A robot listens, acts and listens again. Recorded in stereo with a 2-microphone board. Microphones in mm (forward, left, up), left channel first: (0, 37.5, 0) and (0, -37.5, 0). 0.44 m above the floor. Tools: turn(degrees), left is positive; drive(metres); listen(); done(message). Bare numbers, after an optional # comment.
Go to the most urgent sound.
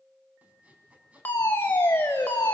# The fire alarm: about 30° left or 150° left.
turn(30)
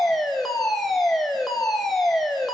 drive(1.0)
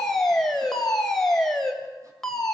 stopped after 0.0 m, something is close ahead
done("Blocked. The fire alarm is further on, straight ahead.")